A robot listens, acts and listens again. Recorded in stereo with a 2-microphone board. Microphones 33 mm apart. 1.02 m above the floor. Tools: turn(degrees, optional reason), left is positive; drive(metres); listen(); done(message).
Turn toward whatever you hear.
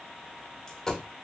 turn(degrees=20, reason="The dropped coin: about 20° left or 160° left.")
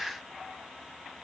listen()
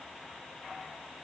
done("I heard a dropped coin, but can't make it out now. It was about straight ahead or 140° left.")